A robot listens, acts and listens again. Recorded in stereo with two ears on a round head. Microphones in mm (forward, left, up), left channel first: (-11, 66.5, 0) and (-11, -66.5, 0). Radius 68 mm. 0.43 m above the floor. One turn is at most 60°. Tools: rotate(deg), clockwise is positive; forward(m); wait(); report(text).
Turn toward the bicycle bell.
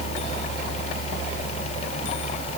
wait()
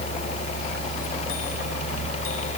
wait()
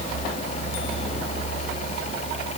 report("I can't make out a bicycle bell to turn to.")